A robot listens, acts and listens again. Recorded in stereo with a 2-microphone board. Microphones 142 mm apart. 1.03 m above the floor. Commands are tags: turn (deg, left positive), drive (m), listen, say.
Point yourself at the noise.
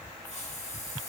<turn deg="50"/>
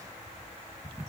<listen/>
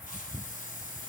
<turn deg="75"/>
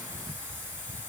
<turn deg="-15"/>
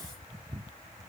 <listen/>
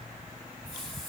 <say>Facing the hiss, 1 to 2 m away.</say>